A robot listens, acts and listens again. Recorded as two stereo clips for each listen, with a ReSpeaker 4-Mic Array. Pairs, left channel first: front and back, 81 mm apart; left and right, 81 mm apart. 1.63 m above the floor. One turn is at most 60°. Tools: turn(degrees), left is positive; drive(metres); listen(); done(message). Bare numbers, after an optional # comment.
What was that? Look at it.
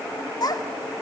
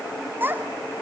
# The child speaking: 30° right.
turn(-30)
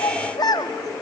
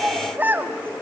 # The child speaking is now 30° right.
turn(-30)
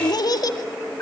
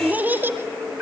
# The child speaking is now 30° right.
turn(-30)
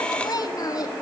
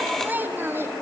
# The child speaking is now 35° right.
turn(-35)
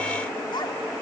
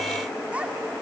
# The child speaking is now 20° right.
turn(-20)
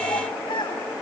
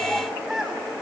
done("Facing the child speaking, 2 to 4 m away.")